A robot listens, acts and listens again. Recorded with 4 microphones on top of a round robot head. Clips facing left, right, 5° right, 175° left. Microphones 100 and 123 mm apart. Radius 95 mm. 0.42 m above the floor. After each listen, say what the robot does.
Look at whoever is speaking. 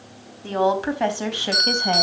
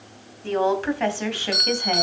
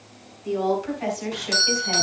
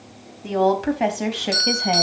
Turn 160° left.
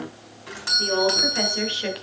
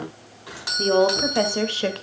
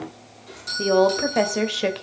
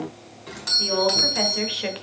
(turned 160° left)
Turn 50° right.
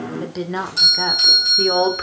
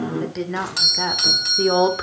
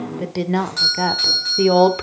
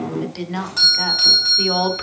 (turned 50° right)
Turn 15° right.
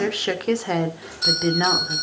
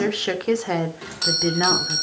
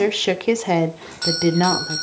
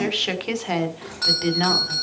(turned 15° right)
Facing the woman speaking, 1 to 2 m away.